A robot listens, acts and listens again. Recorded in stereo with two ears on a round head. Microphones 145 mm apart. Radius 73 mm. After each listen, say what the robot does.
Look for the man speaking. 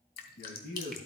Turn 60° left.
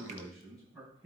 Found it: a man speaking, straight ahead.